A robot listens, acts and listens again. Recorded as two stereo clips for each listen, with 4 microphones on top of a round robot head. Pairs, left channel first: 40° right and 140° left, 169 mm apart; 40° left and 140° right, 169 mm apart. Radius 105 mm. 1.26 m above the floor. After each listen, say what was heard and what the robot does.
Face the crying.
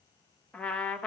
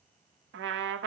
Keep listening.
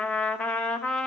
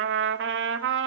Keep listening.
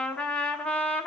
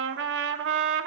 I can't make out crying to turn to.